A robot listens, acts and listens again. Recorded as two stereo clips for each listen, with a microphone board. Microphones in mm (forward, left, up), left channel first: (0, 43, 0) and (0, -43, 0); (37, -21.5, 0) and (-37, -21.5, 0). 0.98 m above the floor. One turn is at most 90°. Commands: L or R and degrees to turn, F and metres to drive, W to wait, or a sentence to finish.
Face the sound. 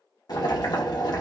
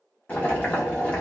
L70
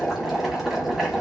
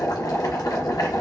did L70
Facing the boiling.